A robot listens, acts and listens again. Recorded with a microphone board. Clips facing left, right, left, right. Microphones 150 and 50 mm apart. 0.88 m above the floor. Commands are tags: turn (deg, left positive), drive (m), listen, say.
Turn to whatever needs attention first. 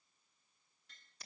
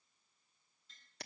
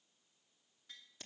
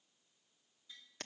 <listen/>
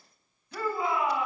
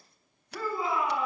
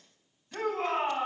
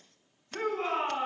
<turn deg="65"/>
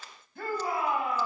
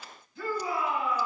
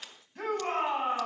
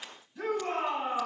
<turn deg="55"/>
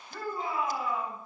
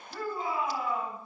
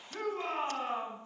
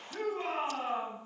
<say>Found it: a shout, straight ahead.</say>